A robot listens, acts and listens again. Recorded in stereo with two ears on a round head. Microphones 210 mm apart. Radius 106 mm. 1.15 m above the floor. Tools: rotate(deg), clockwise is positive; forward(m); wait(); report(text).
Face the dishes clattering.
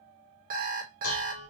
rotate(-65)
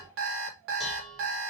report("Facing the dishes clattering, under 1 m away.")